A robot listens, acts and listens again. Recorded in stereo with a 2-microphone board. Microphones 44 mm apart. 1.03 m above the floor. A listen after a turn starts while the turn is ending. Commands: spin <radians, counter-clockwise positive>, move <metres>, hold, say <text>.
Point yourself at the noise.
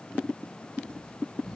spin 0.52
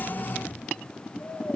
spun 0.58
spin 2.62
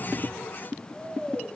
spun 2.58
say Found it: snoring, straight ahead, 1 to 2 m away.